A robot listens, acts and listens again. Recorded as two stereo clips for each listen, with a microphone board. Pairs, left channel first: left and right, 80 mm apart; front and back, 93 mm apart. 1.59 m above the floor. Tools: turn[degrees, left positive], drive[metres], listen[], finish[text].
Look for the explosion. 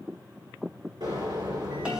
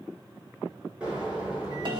Thought: The explosion: 105° right.
Action: turn[-105]
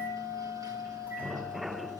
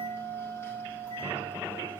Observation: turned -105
Action: finish[I heard an explosion from this way, but can't make it out now.]